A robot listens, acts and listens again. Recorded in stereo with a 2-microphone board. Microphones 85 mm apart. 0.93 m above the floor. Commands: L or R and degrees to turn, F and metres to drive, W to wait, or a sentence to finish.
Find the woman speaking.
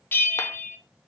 W
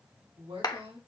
R75
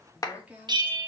R20
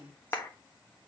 R15
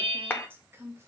R30
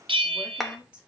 R10
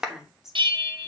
Found it: a woman speaking, straight ahead, 2 to 4 m away.